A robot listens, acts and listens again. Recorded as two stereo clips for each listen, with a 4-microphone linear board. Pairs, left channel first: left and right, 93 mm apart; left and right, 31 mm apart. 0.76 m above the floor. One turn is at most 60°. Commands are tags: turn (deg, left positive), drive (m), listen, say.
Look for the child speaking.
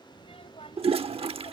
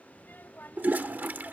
<turn deg="60"/>
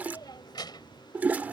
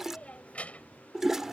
<turn deg="50"/>
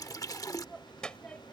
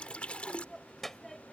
<turn deg="10"/>
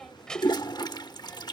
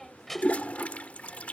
<turn deg="10"/>
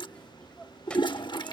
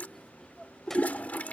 <turn deg="10"/>
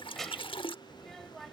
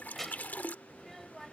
<say>Found it: a child speaking, straight ahead.</say>